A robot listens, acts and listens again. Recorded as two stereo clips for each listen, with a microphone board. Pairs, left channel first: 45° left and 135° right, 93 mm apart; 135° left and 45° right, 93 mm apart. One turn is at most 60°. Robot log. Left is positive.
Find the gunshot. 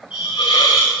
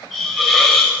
cmd idle
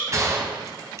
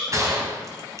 note: The gunshot: 90° right.
cmd yaw -60
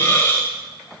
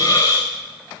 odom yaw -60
note: Nothing new. It was at 30° right.
cmd yaw -30
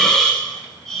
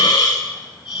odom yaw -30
end: Facing where the gunshot came from. I can't hear it now.